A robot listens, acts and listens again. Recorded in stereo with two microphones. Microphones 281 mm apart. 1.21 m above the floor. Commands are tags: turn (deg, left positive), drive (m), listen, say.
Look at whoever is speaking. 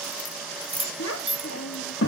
<turn deg="55"/>
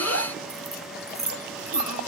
<listen/>
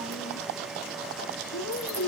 <turn deg="65"/>
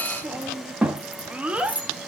<say>Found it: a child speaking, straight ahead, 1 to 2 m away.</say>